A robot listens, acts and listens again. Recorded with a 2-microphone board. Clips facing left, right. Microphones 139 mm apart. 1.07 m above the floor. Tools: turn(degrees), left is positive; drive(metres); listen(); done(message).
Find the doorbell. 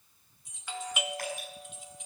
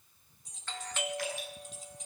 turn(degrees=30)
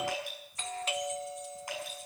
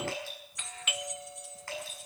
turn(degrees=135)
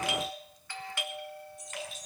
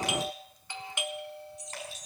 turn(degrees=-25)
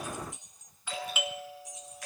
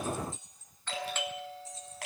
turn(degrees=10)
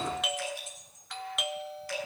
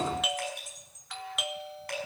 done("Facing the doorbell, 1 to 2 m away.")